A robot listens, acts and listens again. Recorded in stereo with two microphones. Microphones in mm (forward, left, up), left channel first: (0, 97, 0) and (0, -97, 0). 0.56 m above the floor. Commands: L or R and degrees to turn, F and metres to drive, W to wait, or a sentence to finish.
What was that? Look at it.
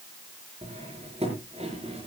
R30
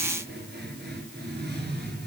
R120
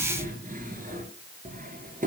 R45
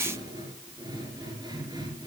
R20
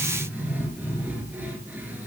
R10
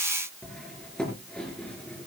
Found it: cutlery clinking, straight ahead.